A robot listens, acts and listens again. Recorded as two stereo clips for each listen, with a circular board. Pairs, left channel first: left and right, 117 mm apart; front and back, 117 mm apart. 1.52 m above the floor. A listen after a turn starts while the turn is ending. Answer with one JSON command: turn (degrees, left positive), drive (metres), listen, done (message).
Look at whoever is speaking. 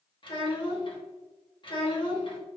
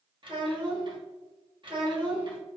{"turn": 135}
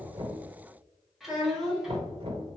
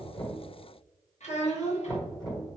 {"done": "Found it: a child speaking, straight ahead, 1 to 2 m away."}